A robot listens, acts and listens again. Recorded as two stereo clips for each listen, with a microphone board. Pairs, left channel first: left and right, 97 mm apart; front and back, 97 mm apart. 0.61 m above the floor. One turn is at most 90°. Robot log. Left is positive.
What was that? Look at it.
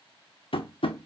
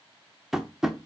note: The tapping: 95° left.
cmd yaw +90
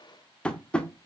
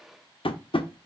note: The tapping is now 10° left.
cmd yaw +10
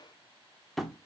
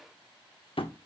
end: Facing the tapping, under 1 m away.